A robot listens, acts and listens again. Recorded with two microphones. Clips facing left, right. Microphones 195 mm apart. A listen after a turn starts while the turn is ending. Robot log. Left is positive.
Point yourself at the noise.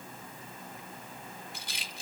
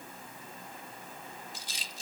note: The rattle: about 65° left or 115° left.
cmd yaw +65
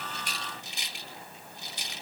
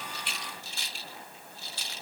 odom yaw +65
note: So it is at 20° left.
cmd yaw +20
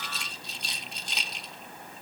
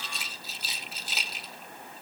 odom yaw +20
end: Facing the rattle.